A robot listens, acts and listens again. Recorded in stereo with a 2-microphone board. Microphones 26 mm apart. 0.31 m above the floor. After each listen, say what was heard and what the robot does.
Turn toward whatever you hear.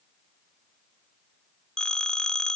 The phone ringing: about 25° left or 155° left. Turn 25° left.
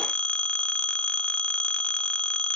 So it is at 125° left. Turn 125° left.
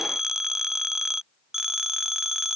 The phone ringing is now 20° right. Turn 20° right.
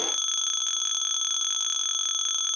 Facing the phone ringing.